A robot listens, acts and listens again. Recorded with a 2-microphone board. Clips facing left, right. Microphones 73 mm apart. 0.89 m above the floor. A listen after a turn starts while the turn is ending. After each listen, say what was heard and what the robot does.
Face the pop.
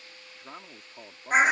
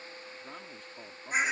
Keep listening.
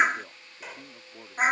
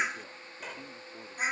Turn 30° left.
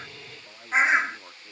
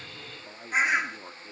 Keep listening.
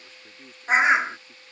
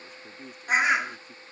I heard a pop, but can't make it out now. It was about 25° right or 145° left.